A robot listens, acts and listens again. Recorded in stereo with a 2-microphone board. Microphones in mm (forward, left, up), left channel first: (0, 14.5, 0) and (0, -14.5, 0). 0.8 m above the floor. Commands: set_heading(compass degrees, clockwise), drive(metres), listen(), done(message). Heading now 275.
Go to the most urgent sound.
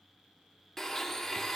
listen()
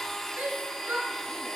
set_heading(350)
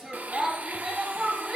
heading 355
set_heading(25)
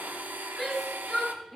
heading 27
drive(1.0)
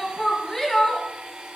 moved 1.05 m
drive(1.0)
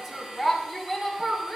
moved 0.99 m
drive(1.0)
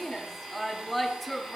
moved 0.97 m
drive(1.0)
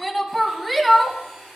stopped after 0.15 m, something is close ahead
done("I am next to the shout.")